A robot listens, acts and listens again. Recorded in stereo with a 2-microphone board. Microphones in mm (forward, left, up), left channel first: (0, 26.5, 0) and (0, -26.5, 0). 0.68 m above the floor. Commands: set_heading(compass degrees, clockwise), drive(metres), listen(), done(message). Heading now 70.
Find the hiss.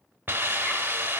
set_heading(115)
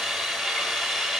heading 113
done("Facing the hiss, 1 to 2 m away.")